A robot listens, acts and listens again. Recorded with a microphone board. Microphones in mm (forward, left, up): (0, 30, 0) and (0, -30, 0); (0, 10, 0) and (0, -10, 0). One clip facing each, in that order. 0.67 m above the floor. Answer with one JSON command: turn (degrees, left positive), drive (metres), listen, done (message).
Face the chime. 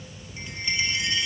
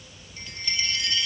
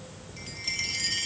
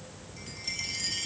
{"turn": 20}
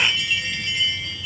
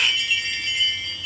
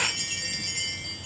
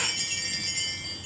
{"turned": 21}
{"done": "Facing the chime."}